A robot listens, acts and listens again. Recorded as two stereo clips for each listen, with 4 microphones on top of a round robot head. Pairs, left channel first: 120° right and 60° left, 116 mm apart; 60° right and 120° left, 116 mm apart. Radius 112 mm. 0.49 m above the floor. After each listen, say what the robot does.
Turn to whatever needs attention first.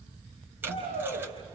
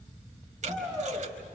Turn 25° left.
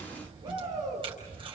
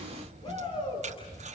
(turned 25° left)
Found it: a shout, straight ahead, over 4 m away.